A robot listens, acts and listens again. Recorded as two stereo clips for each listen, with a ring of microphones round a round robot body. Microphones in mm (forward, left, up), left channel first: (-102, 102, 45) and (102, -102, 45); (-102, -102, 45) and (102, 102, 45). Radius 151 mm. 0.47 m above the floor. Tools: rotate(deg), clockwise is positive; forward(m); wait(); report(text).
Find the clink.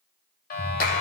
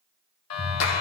wait()
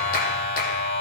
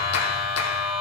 wait()
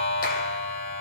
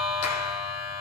report("I can't make out a clink to turn to.")